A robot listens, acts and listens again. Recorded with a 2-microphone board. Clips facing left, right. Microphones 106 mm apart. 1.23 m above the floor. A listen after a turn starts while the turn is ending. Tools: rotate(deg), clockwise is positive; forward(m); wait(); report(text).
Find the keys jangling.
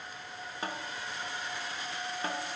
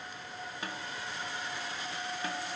wait()
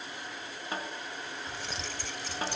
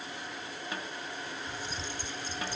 rotate(-90)
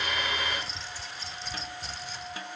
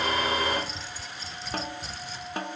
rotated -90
report("Facing the keys jangling.")